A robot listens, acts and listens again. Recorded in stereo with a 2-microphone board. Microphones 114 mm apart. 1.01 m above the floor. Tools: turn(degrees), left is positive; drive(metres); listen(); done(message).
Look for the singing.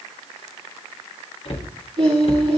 turn(degrees=-65)
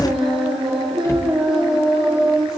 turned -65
done("Found it: singing, straight ahead.")